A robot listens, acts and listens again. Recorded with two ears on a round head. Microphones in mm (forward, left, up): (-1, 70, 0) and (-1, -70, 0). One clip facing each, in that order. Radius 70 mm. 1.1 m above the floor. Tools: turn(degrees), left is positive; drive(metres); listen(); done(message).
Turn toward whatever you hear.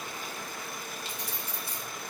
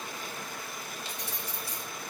turn(degrees=50)
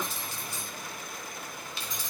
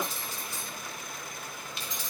turn(degrees=80)
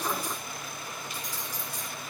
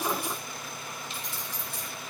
turn(degrees=-25)
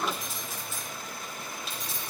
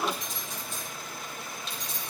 done("Facing the keys jangling, 2 to 4 m away.")